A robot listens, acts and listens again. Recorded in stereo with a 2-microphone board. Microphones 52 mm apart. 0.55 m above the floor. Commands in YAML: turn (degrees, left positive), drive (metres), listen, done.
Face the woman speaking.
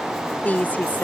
turn: 35
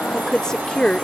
turn: 20
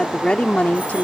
turn: 35
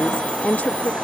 turn: 40
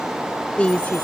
turn: 25
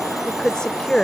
turn: 15
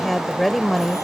done: "Found it: a woman speaking, straight ahead."